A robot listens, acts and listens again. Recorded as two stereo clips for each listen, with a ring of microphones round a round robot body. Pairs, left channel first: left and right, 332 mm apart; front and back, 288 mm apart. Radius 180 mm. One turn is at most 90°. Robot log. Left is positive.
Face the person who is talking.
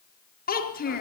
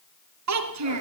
note: The child speaking: 155° left.
cmd yaw +90
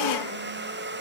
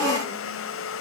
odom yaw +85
note: Nothing new. It was at 70° left.
cmd yaw +70
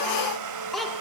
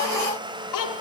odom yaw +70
end: Facing the child speaking, over 4 m away.